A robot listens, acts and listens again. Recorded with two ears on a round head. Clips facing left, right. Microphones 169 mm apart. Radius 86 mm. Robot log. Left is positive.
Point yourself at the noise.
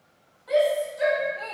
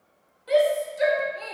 note: The shout: about 35° right or 145° right.
cmd yaw -35
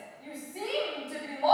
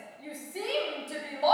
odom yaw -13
note: So it is at 130° right.
cmd yaw -130
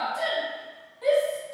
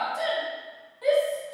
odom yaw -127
end: Found it: a shout, straight ahead.